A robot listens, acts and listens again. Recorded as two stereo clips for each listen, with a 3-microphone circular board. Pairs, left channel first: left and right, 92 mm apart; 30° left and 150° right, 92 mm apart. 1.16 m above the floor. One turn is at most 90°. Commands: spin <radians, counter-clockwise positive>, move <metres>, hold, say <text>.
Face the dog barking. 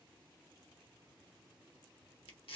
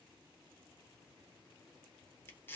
hold
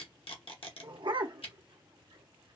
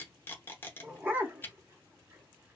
spin -1.48
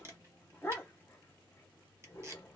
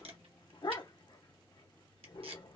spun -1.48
spin 0.52
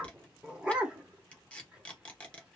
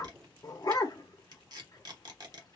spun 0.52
spin -0.17
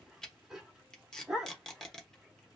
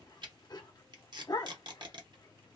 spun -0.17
say Facing the dog barking.